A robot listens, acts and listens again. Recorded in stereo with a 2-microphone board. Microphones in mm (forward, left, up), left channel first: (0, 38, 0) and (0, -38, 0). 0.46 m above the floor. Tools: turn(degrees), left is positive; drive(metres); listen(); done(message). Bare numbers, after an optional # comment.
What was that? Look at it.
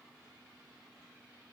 listen()
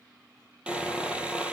turn(-30)
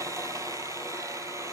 # So it is at 140° right.
turn(-140)
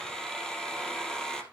done("Found it: sawing, straight ahead, 2 to 4 m away.")